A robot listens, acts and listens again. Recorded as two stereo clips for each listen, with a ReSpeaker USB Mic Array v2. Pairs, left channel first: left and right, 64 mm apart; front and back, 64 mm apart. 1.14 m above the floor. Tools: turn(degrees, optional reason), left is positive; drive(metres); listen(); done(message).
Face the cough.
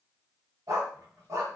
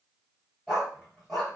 listen()
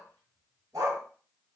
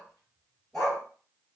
listen()
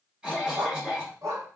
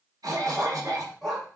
turn(degrees=-160, reason="The cough: 160° right.")
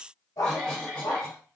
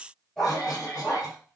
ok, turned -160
turn(degrees=15, reason="The cough is now 15° left.")
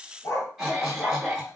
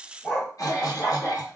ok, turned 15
done("Facing the cough, under 1 m away.")